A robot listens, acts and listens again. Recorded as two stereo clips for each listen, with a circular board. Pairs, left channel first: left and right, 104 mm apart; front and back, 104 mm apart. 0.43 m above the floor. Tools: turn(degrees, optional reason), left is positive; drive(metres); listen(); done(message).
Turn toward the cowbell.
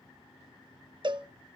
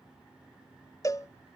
turn(degrees=-55, reason="The cowbell: 55° right.")
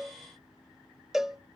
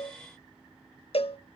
done("Facing the cowbell.")